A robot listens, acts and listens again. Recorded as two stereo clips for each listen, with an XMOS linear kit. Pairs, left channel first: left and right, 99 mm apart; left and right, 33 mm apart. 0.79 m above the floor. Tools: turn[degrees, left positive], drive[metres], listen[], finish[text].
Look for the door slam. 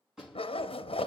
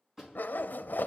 Action: turn[-30]
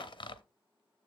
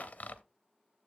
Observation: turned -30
Action: listen[]
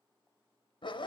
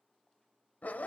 Action: finish[I heard a door slam, but can't make it out now. It was about 25° left or 145° right.]